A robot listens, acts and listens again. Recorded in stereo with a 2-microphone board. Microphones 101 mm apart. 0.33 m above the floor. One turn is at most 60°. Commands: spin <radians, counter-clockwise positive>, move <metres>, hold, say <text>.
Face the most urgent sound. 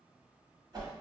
hold
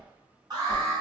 spin -0.79
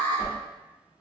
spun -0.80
spin -1.05
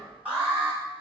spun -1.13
spin -0.26
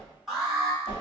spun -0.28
say Found it: an alarm, straight ahead, 1 to 2 m away.